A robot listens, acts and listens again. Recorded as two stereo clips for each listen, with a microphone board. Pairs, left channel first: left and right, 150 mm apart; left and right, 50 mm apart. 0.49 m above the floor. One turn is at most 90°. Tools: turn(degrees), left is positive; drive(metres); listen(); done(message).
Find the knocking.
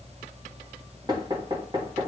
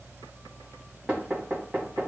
turn(degrees=-30)
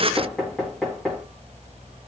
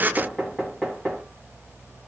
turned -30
done("Facing the knocking.")